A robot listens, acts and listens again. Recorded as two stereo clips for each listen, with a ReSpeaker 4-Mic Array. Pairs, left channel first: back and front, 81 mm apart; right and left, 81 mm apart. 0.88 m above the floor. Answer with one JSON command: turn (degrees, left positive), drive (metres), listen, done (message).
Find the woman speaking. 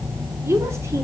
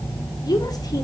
{"turn": -55}
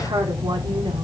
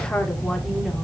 {"done": "Found it: a woman speaking, straight ahead, 2 to 4 m away."}